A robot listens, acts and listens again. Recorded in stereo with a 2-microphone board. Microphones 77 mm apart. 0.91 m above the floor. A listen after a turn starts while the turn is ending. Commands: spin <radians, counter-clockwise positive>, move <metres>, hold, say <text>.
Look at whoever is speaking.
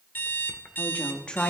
spin 0.52
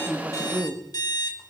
spin -0.79
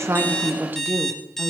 spin -0.70
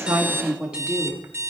spin -0.26
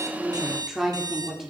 say Facing the woman speaking.